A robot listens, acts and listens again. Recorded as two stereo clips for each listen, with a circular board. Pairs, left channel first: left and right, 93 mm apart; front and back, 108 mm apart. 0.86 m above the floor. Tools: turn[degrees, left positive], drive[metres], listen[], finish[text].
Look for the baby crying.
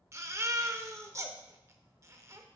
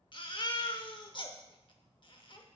Thought: The baby crying: 35° right.
Action: turn[-35]
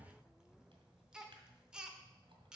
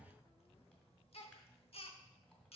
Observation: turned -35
Thought: The baby crying is now 10° right.
Action: turn[-10]
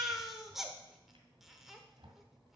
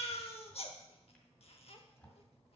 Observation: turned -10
Action: finish[Facing the baby crying.]